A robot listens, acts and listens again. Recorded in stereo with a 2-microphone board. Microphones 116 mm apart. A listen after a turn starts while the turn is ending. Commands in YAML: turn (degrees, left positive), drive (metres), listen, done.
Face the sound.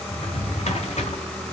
turn: 90
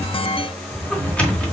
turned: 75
turn: 10
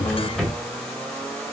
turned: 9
done: "Facing the drawer."